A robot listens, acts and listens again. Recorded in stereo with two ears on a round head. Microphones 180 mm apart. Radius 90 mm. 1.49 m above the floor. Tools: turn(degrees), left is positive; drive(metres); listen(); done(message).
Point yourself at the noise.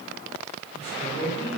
turn(degrees=30)
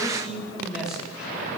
done("Found it: a man speaking, straight ahead, over 4 m away.")